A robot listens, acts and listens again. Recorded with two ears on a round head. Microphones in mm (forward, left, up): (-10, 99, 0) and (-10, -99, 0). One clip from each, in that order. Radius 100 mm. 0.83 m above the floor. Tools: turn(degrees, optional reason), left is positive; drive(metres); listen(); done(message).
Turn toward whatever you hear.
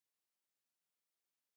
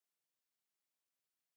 listen()
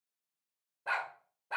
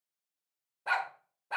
turn(degrees=-30)
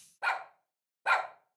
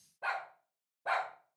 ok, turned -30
turn(degrees=60, reason="So it is at 60° left.")
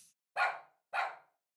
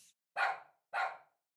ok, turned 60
turn(degrees=20, reason="The dog barking is now 20° left.")
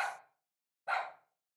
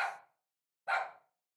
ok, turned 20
done("Found it: a dog barking, straight ahead, 1 to 2 m away.")